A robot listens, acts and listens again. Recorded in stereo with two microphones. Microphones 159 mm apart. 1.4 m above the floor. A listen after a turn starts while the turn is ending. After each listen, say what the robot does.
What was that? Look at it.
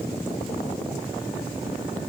Keep listening.
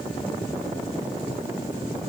Keep listening.
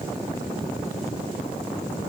I can't make out anything to turn to.